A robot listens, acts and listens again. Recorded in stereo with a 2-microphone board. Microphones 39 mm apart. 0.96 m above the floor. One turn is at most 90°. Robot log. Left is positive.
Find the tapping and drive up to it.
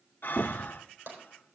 note: The tapping: about 65° right or 115° right.
cmd yaw -65
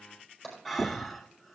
cmd fwd 1.0
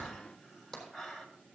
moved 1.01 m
cmd fwd 1.0
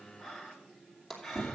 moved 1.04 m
cmd fwd 1.0
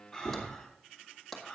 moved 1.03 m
cmd fwd 1.0
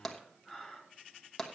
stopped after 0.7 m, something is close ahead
note: The tapping is now 10° left.
cmd yaw +10
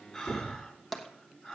end: Arrived at the tapping, straight ahead.